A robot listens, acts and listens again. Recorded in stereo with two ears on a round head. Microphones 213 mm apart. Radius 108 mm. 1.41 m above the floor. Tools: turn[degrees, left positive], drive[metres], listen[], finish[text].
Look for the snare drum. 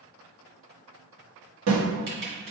Action: turn[-90]
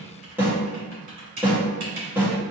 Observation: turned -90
Thought: So it is at 10° right.
Action: turn[-10]
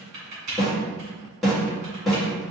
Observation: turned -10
Action: finish[Facing the snare drum, 1 to 2 m away.]